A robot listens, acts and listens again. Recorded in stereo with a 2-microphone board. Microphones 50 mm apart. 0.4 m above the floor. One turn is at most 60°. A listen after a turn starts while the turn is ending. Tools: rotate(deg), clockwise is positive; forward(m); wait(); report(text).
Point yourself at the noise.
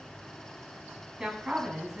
rotate(30)
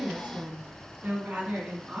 rotate(60)
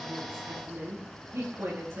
rotate(60)
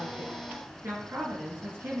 rotate(55)
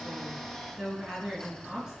rotate(10)
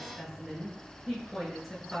report("Facing the woman speaking.")